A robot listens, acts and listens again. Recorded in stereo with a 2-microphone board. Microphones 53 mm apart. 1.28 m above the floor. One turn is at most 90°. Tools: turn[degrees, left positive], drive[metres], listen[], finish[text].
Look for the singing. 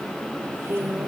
Thought: The singing: about 45° right or 135° right.
Action: turn[-45]
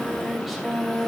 Action: finish[Facing the singing.]